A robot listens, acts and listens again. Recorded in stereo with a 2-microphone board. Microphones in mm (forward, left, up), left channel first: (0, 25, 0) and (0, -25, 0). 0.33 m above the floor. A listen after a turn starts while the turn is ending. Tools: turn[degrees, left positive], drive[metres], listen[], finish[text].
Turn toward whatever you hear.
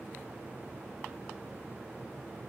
Action: listen[]
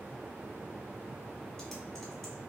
Action: turn[30]
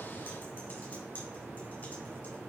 Action: listen[]
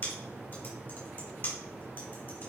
Thought: So it is at 140° left.
Action: turn[140]
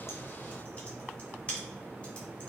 Thought: The typing on a keyboard is now 25° left.
Action: turn[25]
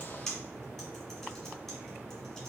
Thought: The typing on a keyboard is now 10° left.
Action: turn[10]
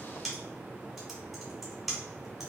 Action: finish[Found it: typing on a keyboard, straight ahead, 1 to 2 m away.]